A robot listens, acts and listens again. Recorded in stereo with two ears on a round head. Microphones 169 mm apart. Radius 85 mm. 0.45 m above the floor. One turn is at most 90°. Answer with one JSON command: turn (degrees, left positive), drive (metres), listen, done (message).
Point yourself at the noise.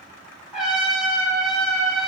{"turn": -30}
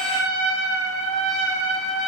{"turn": -90}
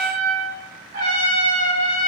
{"turn": -85}
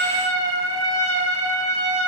{"turn": 20}
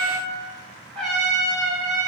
{"done": "Facing the trumpet."}